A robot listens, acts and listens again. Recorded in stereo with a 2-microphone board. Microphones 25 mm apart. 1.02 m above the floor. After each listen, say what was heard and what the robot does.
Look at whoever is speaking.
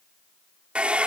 Keep listening.
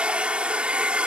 Keep listening.
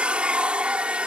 I can't make out anyone speaking, only a hair dryer.